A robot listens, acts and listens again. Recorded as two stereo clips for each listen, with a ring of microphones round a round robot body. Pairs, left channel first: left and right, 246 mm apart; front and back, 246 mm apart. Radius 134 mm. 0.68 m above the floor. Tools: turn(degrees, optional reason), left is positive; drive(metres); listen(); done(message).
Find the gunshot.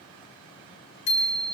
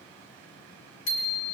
listen()
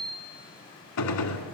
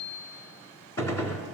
turn(degrees=80, reason="The gunshot: 80° left.")
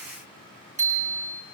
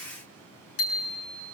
done("Facing where the gunshot came from. I can't hear it now.")